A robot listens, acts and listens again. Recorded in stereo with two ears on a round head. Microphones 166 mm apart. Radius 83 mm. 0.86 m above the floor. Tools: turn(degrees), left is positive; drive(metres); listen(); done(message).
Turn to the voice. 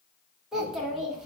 turn(degrees=-30)
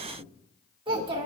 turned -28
turn(degrees=-150)
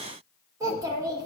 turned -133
turn(degrees=-20)
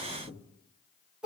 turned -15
done("Found it: a child speaking, straight ahead, under 1 m away.")